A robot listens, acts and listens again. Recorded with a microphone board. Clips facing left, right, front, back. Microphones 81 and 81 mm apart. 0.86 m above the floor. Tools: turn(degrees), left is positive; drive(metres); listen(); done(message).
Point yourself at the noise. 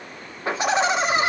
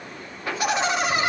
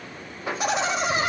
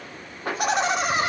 turn(degrees=150)
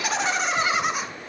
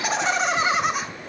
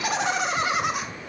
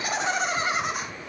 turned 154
done("Facing the laughter, 2 to 4 m away.")